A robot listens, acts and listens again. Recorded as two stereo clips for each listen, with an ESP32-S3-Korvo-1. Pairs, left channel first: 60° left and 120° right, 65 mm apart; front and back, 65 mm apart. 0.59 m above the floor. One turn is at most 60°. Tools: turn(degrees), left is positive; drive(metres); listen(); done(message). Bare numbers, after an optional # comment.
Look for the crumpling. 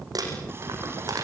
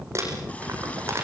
# The crumpling: 135° right.
turn(-60)
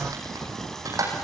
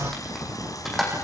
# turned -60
# The crumpling is now 90° right.
turn(-60)
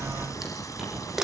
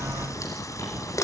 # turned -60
# The crumpling is now 35° right.
turn(-35)
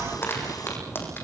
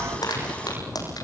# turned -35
done("Facing the crumpling, over 4 m away.")